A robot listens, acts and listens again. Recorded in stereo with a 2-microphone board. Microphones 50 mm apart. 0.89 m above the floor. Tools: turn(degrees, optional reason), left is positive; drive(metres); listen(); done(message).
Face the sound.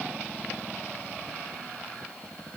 listen()
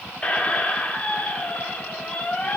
turn(degrees=25, reason="The squeak: about 25° left or 155° left.")
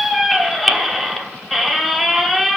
done("Found it: a squeak, straight ahead.")